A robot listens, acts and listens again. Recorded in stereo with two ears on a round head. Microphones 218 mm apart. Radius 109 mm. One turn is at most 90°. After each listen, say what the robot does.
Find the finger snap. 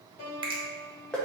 Turn 20° right.
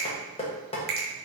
Turn 90° right.
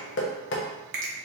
Turn 35° right.
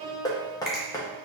Facing the finger snap, 1 to 2 m away.